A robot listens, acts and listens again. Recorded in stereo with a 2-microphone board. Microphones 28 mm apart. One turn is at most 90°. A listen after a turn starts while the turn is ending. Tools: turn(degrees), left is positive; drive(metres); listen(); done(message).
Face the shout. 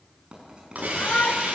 turn(degrees=55)
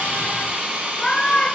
turn(degrees=35)
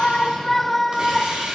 turn(degrees=10)
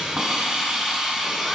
listen()
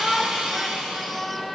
done("Found it: a shout, straight ahead.")